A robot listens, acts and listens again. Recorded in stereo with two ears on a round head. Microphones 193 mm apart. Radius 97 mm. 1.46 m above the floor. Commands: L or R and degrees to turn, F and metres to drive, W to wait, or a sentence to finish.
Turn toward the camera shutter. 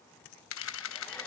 L65
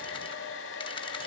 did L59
W
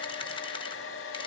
W
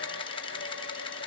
L25
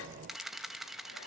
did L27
Found it: a camera shutter, straight ahead.